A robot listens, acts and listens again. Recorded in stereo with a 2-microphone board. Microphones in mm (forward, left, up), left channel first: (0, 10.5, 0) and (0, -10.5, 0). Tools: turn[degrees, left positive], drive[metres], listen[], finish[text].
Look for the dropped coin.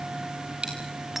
Thought: The dropped coin: about 60° right or 120° right.
Action: turn[-60]
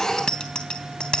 Action: listen[]
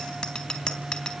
Action: finish[I heard a dropped coin, but can't make it out now. It was about straight ahead or 60° right.]